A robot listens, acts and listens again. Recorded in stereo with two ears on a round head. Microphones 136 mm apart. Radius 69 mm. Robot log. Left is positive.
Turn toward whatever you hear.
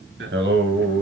cmd yaw -90
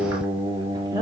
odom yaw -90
note: So it is at 30° right.
cmd yaw -30
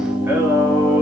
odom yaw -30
note: The singing is now 20° right.
cmd yaw -20
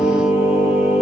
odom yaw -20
note: The singing is now 15° right.
cmd yaw -15
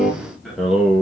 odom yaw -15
end: Found it: singing, straight ahead, 2 to 4 m away.